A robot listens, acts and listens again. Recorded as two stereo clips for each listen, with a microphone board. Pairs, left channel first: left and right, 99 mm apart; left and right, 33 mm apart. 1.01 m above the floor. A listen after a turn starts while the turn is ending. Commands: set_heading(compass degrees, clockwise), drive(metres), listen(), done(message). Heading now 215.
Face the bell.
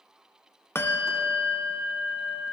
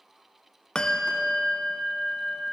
set_heading(190)
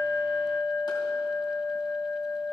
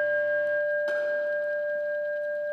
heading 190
set_heading(60)
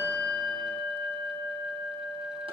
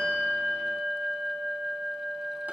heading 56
done("Found it: a bell, straight ahead, 1 to 2 m away.")